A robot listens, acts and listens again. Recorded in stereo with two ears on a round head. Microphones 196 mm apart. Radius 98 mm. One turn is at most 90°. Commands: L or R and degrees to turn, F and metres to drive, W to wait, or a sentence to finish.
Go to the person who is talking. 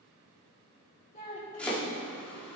L35
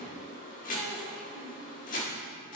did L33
W
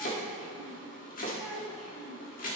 F1.0
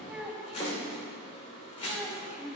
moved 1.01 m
F1.0
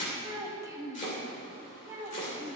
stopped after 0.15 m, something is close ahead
R15
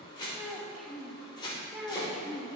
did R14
Arrived at the child speaking, straight ahead.